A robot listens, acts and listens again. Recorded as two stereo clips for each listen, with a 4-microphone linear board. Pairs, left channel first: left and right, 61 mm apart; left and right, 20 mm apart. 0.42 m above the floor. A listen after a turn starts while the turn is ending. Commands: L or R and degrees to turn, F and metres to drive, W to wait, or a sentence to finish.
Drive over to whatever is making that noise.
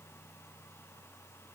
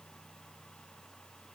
W
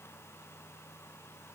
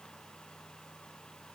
W
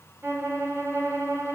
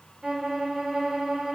R40
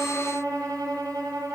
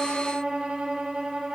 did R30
R110
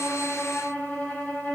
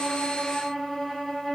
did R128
L20
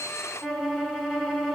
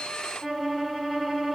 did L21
F1.0
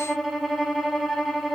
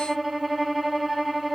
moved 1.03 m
F1.0
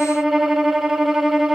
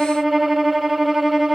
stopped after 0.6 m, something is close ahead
Arrived at the violin, straight ahead.